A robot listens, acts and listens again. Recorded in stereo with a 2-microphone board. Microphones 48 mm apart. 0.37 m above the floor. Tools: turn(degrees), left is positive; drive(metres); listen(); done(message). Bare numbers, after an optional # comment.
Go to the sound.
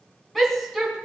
turn(30)
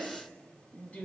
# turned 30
# So it is at 150° left.
turn(150)
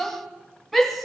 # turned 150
drive(1.0)
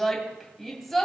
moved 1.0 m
drive(1.0)
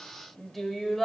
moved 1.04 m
drive(1.0)
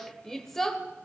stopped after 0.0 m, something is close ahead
# The shout is now 10° left.
turn(10)
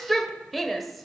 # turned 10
done("Arrived at the shout, straight ahead.")